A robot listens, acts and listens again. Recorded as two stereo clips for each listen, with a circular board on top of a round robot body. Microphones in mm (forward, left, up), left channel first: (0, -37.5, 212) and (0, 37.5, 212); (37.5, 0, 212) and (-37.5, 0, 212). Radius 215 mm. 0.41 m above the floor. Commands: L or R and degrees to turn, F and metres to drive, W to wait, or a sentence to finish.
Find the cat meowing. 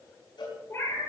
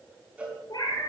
R30
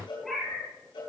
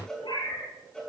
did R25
Facing the cat meowing, over 4 m away.